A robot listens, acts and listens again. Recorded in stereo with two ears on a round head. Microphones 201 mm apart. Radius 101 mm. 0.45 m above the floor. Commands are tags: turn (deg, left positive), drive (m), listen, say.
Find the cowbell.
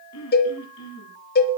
<turn deg="45"/>
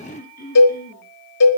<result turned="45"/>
<turn deg="90"/>
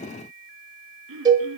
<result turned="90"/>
<turn deg="-15"/>
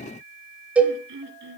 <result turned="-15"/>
<say>Found it: a cowbell, straight ahead, 1 to 2 m away.</say>